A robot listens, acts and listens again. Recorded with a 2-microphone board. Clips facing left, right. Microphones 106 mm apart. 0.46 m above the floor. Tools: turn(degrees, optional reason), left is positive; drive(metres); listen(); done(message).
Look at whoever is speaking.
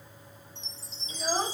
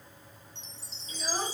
turn(degrees=15, reason="The child speaking: about 15° left or 165° left.")
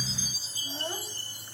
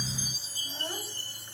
done("Found it: a child speaking, straight ahead, 1 to 2 m away.")